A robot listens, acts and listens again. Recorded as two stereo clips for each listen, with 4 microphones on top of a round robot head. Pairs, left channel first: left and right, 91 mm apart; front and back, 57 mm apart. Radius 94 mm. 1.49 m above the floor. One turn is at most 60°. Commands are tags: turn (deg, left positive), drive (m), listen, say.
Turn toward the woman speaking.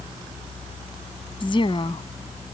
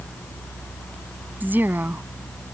<turn deg="60"/>
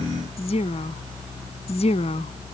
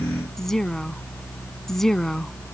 <turn deg="60"/>
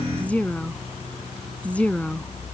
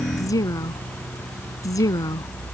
<turn deg="10"/>
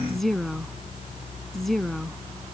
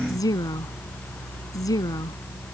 <say>Found it: a woman speaking, straight ahead.</say>